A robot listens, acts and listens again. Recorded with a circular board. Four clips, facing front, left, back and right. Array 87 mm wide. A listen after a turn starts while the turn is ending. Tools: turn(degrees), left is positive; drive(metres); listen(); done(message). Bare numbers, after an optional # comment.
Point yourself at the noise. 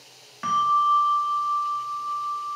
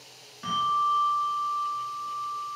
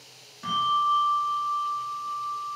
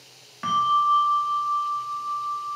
# The bell: 45° right.
turn(-45)
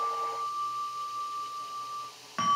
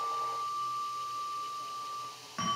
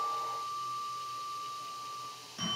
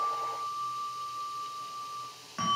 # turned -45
done("Found it: a bell, straight ahead, 2 to 4 m away.")